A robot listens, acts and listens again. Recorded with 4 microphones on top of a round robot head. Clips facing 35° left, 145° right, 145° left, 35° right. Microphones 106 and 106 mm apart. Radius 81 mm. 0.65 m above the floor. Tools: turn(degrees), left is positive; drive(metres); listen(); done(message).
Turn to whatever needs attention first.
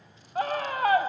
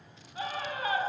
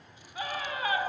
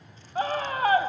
done("Found it: a scream, straight ahead.")